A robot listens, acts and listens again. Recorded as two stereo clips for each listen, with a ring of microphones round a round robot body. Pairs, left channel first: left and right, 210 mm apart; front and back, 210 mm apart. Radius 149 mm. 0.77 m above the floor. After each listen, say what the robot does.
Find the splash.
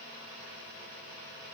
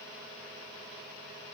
Keep listening.
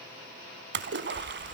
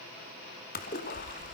Turn 60° right.
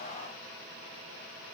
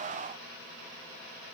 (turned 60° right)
Facing where the splash came from. I can't hear it now.